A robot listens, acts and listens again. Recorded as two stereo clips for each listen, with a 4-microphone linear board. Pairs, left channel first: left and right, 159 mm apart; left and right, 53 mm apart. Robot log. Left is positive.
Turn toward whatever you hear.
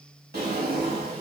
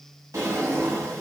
cmd yaw -90
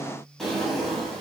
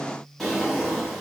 end: Facing the drawer.